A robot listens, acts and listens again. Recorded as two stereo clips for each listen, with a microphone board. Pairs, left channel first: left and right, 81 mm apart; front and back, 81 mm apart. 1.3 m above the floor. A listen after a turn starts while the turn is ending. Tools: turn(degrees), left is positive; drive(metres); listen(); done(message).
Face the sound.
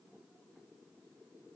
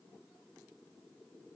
listen()
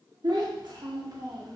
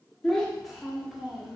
turn(degrees=-100)
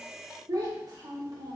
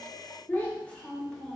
turn(degrees=-85)
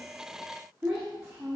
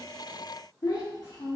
turn(degrees=-15)
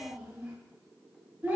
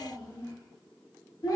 turn(degrees=-15)
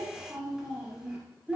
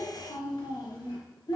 done("Found it: a child speaking, straight ahead.")